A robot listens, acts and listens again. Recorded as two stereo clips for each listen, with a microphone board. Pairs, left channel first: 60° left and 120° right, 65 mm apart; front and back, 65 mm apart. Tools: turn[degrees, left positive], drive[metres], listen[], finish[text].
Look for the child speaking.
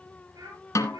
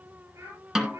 Thought: The child speaking: 135° right.
Action: turn[-135]
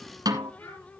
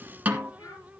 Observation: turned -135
Thought: The child speaking is now 15° left.
Action: turn[15]
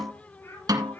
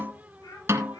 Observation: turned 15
Action: finish[Found it: a child speaking, straight ahead, over 4 m away.]